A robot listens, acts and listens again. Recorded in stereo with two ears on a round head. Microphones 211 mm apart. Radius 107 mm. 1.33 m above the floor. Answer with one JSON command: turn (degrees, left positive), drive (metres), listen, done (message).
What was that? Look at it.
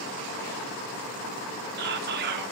{"turn": -45}
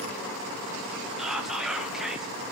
{"done": "Found it: whispering, straight ahead, 1 to 2 m away."}